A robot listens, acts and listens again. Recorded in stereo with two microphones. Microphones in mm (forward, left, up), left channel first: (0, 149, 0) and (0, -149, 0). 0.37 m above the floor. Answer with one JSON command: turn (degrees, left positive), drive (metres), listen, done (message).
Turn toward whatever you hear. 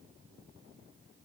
{"listen": true}
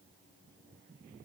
{"listen": true}
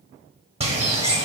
{"turn": -20}
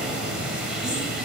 {"done": "Found it: a bird, straight ahead, under 1 m away."}